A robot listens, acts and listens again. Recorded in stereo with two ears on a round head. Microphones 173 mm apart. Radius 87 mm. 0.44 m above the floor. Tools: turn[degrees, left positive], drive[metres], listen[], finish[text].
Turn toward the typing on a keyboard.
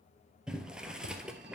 Action: listen[]
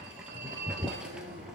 Action: listen[]
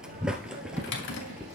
Thought: The typing on a keyboard: about 60° left or 120° left.
Action: turn[60]
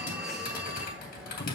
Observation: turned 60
Thought: So it is at 50° left.
Action: turn[50]
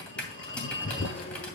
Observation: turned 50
Action: finish[Facing the typing on a keyboard.]